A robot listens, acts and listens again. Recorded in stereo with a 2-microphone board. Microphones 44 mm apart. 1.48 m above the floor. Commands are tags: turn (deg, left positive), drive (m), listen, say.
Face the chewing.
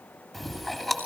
<turn deg="30"/>
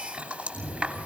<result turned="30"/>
<turn deg="-30"/>
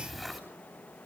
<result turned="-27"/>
<say>Facing the chewing.</say>